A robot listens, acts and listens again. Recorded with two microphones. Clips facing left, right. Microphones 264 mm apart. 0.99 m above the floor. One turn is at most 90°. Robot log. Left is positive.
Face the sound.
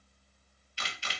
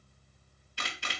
note: The camera shutter: about 60° right or 120° right.
cmd yaw -60
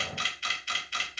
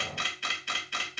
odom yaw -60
note: So it is at 60° right.
cmd yaw -60
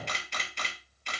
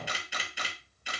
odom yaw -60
note: The camera shutter is now 10° right.
cmd yaw -10
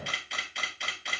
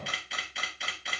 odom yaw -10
end: Found it: a camera shutter, straight ahead.